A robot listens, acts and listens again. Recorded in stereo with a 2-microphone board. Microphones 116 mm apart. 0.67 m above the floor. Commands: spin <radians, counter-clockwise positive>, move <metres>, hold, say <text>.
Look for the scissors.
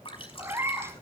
hold
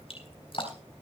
hold
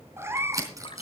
spin -0.52
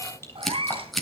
say Found it: scissors, straight ahead.